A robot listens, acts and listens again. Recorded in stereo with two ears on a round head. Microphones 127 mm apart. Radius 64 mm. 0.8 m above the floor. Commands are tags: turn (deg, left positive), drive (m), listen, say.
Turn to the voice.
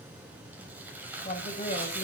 <turn deg="55"/>
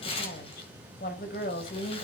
<turn deg="70"/>
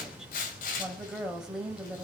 <say>Found it: a woman speaking, straight ahead.</say>